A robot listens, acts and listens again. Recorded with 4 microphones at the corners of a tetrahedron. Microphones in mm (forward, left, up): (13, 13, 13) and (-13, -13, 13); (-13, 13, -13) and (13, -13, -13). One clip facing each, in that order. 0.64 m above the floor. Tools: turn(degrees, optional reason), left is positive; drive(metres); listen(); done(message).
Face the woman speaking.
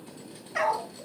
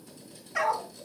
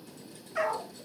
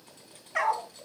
listen()
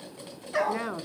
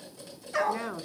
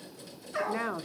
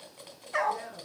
turn(degrees=120, reason="The woman speaking: 120° left.")
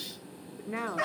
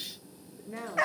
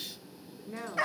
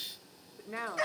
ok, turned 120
done("Facing the woman speaking.")